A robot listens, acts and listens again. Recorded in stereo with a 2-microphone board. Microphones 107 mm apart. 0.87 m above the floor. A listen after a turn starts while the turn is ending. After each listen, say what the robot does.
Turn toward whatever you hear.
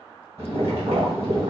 Turn 60° right.
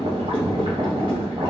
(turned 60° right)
Turn 55° right.
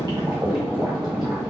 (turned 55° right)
Facing the boiling, 1 to 2 m away.